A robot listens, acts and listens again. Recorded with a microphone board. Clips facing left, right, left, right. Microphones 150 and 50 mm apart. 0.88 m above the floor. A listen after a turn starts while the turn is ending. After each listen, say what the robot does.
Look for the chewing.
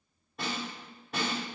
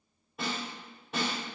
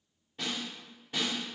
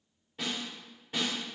Keep listening.
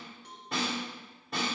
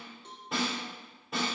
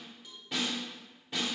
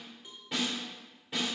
Keep listening.
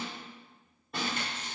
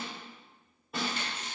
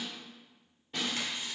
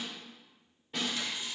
Turn 50° left.
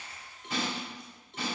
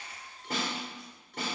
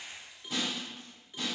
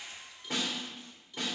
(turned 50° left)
Keep listening.
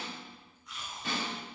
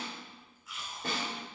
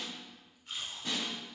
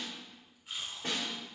Facing the chewing.